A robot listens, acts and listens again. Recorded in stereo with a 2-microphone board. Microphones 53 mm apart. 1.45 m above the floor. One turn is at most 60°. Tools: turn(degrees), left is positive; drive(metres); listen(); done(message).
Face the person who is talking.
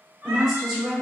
turn(degrees=-30)
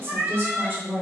turn(degrees=-60)
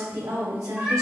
turn(degrees=-60)
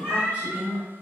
turn(degrees=-25)
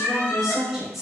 done("Facing the woman speaking, under 1 m away.")